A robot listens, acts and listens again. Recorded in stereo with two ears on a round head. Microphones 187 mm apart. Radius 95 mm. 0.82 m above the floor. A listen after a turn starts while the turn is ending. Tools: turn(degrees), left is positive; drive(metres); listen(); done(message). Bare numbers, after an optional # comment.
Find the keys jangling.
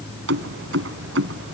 # The keys jangling: about 55° right or 125° right.
turn(-55)
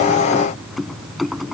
done("Found it: keys jangling, straight ahead.")